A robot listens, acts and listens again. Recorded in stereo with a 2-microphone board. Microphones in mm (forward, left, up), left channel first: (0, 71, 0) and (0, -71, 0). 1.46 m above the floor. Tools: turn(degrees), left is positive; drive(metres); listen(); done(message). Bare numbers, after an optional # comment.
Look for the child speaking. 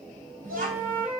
# The child speaking: about 70° right or 110° right.
turn(-70)
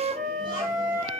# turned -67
listen()
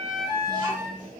listen()
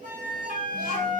done("I heard a child speaking, but can't make it out now. It was about 5° right or 40° right.")